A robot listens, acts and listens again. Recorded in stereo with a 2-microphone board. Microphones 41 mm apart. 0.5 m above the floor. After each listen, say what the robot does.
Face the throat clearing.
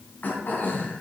Turn 45° left.
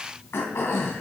Turn 90° left.
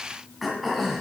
Facing the throat clearing.